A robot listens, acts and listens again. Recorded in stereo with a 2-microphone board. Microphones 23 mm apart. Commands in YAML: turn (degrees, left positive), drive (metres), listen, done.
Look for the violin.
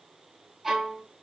turn: -30
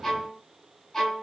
turn: 15
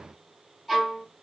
done: "Found it: a violin, straight ahead, 2 to 4 m away."